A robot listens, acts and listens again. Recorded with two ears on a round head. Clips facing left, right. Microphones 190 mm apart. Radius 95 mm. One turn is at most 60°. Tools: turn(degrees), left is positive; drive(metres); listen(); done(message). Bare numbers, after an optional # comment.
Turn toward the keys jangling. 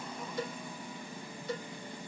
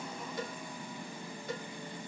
listen()
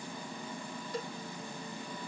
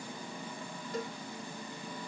listen()
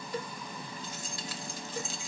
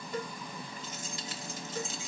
# The keys jangling: about 20° right or 160° right.
turn(-20)
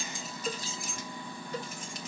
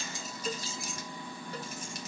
# So it is at 140° right.
turn(-60)
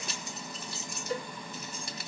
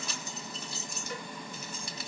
# The keys jangling is now 80° right.
turn(-60)
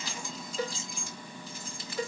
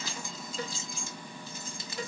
# The keys jangling is now 20° right.
turn(-20)
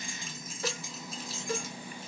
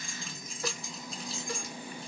done("Found it: keys jangling, straight ahead.")